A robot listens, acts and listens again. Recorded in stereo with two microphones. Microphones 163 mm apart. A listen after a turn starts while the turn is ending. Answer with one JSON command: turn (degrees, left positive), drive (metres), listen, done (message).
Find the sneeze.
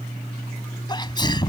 {"turn": 25}
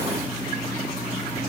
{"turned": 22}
{"listen": true}
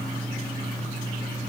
{"done": "I heard a sneeze, but can't make it out now. It was about 5° left or 130° left."}